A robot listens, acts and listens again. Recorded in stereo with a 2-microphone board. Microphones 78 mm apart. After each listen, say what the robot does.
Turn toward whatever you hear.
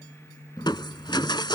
Turn 90° left.
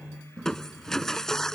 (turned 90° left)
Turn 10° left.
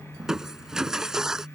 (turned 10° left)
Facing the crushing.